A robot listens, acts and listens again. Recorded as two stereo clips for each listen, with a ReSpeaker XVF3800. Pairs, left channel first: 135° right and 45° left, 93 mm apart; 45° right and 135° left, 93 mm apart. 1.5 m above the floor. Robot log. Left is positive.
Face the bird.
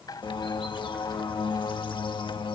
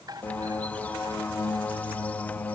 note: The bird: 115° right.
cmd yaw -115
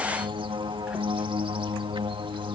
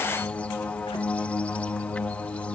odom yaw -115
note: The bird is now 30° left.
cmd yaw +30
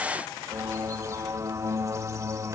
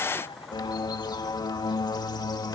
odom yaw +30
note: The bird is now 10° right.
cmd yaw -10
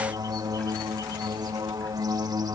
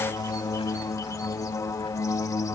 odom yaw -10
end: Facing the bird.